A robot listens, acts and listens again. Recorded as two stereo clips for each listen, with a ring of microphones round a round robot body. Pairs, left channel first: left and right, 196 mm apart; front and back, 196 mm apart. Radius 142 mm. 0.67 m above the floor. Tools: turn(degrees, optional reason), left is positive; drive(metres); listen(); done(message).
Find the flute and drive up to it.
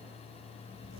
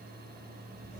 listen()
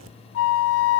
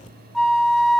turn(degrees=90, reason="The flute: 90° left.")
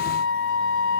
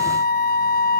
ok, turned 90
turn(degrees=40, reason="The flute is now 40° left.")
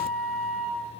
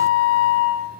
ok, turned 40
drive(metres=1.0)
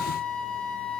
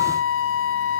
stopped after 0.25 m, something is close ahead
done("Something is in my way. I am facing the flute but have not reached it.")